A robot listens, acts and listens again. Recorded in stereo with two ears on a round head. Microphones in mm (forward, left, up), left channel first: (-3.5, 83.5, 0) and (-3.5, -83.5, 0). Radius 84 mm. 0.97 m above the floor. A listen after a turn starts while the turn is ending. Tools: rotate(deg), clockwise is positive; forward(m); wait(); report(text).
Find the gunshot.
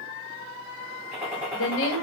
rotate(30)
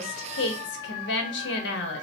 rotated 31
wait()
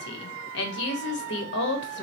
report("I heard a gunshot, but can't make it out now. It was about 25° left or 140° right.")